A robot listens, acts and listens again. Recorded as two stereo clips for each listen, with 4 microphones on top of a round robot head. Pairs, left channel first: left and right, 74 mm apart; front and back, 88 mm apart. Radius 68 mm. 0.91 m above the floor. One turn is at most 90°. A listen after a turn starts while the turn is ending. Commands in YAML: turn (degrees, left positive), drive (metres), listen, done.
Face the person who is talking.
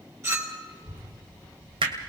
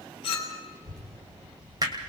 turn: 90
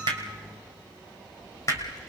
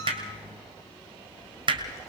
turn: 55
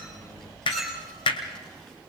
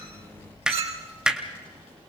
turn: 10
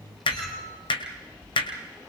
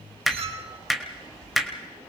done: "Facing the child speaking, over 4 m away."